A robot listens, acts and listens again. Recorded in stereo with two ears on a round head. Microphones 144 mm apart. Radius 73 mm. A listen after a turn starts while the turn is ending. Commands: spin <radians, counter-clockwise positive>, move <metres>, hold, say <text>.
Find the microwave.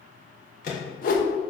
spin 0.96
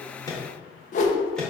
say Found it: a microwave, straight ahead, 1 to 2 m away.